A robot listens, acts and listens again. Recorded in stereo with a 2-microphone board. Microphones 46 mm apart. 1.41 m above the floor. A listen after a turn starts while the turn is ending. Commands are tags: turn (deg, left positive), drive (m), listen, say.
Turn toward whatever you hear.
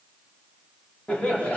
<turn deg="25"/>
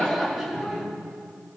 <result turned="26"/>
<say>Found it: laughter, straight ahead.</say>